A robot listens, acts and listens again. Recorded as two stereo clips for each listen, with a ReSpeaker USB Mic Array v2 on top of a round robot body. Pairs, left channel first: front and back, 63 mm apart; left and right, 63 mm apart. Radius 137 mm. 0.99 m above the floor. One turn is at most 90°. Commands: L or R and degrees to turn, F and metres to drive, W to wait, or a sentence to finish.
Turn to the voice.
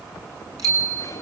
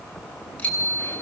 W
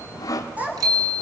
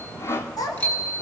L90
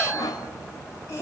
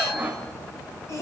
L45
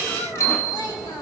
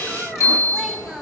Facing the child speaking, over 4 m away.